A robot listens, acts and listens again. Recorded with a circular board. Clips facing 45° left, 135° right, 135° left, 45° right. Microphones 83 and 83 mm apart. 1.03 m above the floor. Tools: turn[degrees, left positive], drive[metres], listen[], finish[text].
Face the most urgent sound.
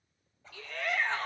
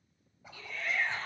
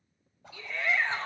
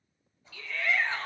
Thought: The shout: 65° left.
Action: turn[65]
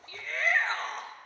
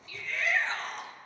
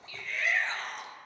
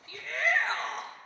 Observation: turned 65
Action: finish[Found it: a shout, straight ahead, 1 to 2 m away.]